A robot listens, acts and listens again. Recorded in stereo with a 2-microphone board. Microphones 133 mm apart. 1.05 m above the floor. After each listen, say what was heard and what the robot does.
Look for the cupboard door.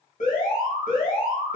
Keep listening.
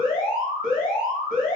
Keep listening.
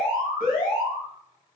I can't make out a cupboard door to turn to.